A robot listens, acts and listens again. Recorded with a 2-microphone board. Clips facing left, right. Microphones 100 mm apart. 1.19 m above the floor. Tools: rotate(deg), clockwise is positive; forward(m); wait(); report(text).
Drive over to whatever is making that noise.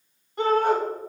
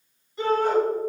rotate(-55)
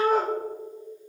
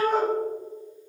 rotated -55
forward(1.0)
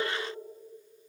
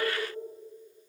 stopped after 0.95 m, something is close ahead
wait()
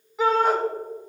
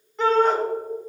report("Arrived at the shout, straight ahead.")